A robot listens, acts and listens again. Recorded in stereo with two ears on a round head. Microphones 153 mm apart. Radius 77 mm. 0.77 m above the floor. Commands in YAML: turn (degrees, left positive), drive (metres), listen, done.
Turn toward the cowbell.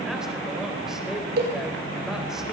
turn: -65
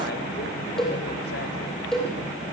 done: "Found it: a cowbell, straight ahead, over 4 m away."